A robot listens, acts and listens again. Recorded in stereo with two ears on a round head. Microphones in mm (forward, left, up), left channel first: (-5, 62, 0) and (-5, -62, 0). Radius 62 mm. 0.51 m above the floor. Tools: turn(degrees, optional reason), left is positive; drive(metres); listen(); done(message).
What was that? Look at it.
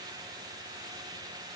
listen()
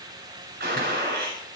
turn(degrees=-90)
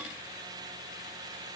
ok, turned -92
done("Facing where the gunshot came from. I can't hear it now.")